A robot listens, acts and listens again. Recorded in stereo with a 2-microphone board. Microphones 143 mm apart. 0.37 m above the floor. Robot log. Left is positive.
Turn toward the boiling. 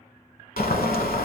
cmd yaw +90
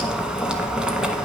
end: Facing the boiling, under 1 m away.